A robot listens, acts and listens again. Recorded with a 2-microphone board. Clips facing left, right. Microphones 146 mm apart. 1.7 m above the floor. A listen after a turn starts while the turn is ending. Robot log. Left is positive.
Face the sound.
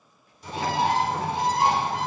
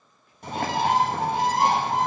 note: The bird: about 60° right or 120° right.
cmd yaw -60
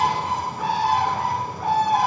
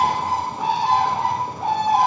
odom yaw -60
note: So it is at 25° right.
cmd yaw -25
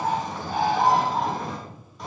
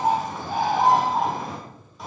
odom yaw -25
end: Found it: a bird, straight ahead, 1 to 2 m away.